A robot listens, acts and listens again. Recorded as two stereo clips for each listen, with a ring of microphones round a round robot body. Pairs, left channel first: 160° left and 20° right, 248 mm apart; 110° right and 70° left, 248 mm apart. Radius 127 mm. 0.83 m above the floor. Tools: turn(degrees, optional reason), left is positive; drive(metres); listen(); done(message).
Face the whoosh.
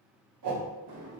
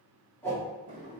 turn(degrees=-30, reason="The whoosh: 30° right.")
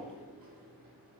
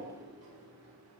listen()
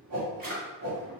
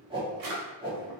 done("Found it: a whoosh, straight ahead.")